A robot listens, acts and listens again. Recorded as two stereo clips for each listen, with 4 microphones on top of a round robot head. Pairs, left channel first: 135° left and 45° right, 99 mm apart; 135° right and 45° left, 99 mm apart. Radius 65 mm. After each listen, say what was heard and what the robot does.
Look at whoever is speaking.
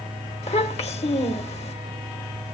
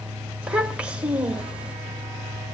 The child speaking: 125° left. Turn 125° left.
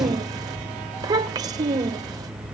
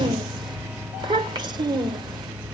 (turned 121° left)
Found it: a child speaking, straight ahead, 1 to 2 m away.